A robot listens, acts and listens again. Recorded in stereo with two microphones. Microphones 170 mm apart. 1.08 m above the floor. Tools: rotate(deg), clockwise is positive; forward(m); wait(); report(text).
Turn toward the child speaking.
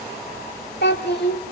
rotate(-75)
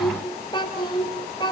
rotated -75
rotate(-25)
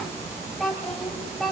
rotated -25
report("Found it: a child speaking, straight ahead.")